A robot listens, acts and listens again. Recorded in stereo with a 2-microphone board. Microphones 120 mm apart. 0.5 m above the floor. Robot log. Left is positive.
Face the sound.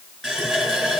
cmd yaw -30
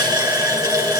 note: So it is at 150° right.
cmd yaw -150
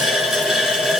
end: Found it: a running tap, straight ahead, 2 to 4 m away.